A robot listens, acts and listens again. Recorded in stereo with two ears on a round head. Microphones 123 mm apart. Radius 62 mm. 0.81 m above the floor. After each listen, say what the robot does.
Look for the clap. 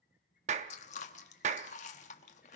Turn 55° right.
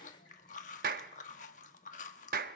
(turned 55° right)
Turn 70° right.
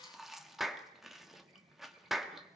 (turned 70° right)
Facing the clap, under 1 m away.